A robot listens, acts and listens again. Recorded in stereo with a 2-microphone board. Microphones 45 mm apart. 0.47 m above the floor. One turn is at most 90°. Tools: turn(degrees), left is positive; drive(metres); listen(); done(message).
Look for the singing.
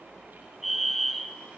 listen()
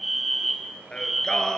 turn(degrees=30)
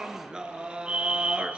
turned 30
turn(degrees=-30)
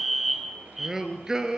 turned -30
turn(degrees=-20)
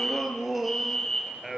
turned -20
done("Found it: singing, straight ahead, 2 to 4 m away.")